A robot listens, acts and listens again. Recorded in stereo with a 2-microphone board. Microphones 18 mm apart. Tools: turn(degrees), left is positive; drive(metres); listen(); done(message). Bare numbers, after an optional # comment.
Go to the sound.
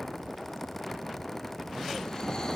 # The snoring: about 40° left or 140° left.
turn(40)
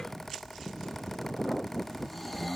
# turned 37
drive(1.0)
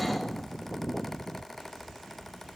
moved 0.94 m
listen()
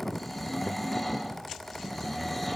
drive(1.0)
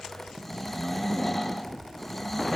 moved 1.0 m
# The snoring is now 10° left.
turn(10)
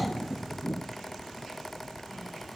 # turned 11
listen()
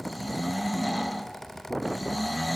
drive(1.0)
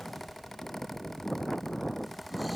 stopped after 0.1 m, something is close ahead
listen()
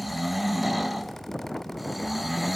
# The snoring is now 10° right.
turn(-10)
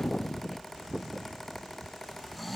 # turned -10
done("I am next to the snoring.")